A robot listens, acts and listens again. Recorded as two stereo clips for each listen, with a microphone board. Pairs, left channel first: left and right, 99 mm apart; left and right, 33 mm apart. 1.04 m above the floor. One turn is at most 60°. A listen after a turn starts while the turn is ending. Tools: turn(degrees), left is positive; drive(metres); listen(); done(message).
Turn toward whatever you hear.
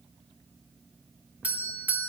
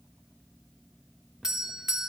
turn(degrees=-15)
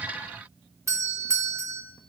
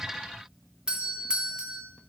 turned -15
turn(degrees=-60)
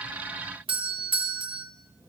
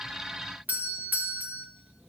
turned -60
turn(degrees=-60)
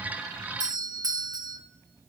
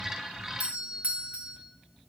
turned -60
turn(degrees=-50)
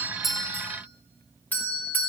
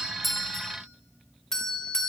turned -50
turn(degrees=20)
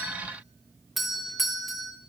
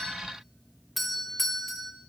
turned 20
done("Found it: a doorbell, straight ahead, under 1 m away.")